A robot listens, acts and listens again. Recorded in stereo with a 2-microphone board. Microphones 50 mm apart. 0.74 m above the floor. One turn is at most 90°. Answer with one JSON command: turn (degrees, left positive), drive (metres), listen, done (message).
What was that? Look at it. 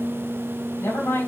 {"turn": 60}
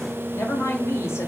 {"turn": 65}
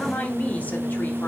{"turn": 30}
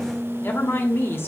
{"turn": 50}
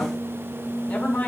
{"turn": 25}
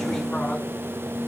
{"listen": true}
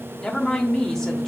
{"turn": 10}
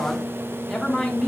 {"done": "Found it: a woman speaking, straight ahead, 1 to 2 m away."}